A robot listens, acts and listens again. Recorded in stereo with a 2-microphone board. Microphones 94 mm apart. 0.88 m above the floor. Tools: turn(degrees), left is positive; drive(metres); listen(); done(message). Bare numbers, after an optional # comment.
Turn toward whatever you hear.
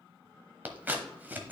# The scissors: about 20° right or 160° right.
turn(-20)
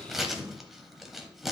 done("Found it: scissors, straight ahead, 1 to 2 m away.")